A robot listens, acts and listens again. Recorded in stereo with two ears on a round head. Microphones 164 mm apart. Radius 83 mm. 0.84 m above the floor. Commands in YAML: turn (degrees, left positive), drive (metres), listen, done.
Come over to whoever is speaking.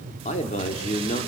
turn: 35
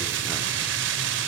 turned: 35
listen: true
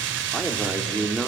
drive: 1.0
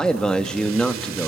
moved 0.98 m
drive: 1.0
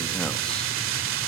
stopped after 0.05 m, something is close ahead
listen: true
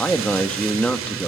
done: "Arrived at the man speaking, straight ahead."